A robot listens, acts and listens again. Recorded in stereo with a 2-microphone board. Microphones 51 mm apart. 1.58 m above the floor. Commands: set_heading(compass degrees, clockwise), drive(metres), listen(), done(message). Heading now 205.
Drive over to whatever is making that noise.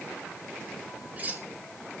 set_heading(240)
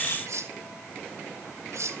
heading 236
set_heading(351)
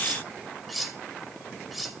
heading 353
drive(1.0)
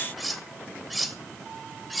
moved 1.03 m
drive(1.0)
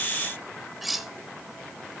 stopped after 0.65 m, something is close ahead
done("Arrived at the cutlery clinking, straight ahead.")